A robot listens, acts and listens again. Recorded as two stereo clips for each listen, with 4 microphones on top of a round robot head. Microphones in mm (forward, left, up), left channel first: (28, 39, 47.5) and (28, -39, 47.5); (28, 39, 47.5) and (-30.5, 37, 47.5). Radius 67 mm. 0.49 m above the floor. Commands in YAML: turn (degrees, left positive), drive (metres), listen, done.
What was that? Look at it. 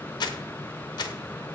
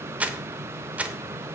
turn: 115
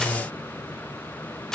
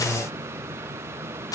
done: "Found it: crumpling, straight ahead."